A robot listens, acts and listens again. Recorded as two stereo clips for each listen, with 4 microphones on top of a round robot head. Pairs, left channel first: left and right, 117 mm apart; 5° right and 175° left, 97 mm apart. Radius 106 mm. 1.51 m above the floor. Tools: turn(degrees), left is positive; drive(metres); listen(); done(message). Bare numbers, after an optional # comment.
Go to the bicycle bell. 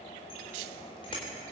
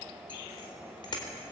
# The bicycle bell: 35° left.
turn(35)
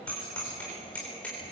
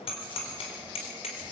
# The bicycle bell is now 10° left.
turn(10)
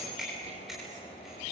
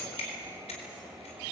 drive(1.0)
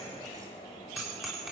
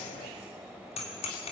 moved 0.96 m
drive(1.0)
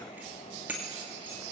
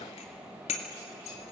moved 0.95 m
# The bicycle bell is now 10° right.
turn(-10)
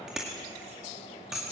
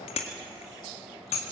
drive(1.0)
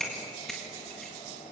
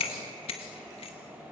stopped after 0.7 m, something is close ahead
done("I am next to the bicycle bell.")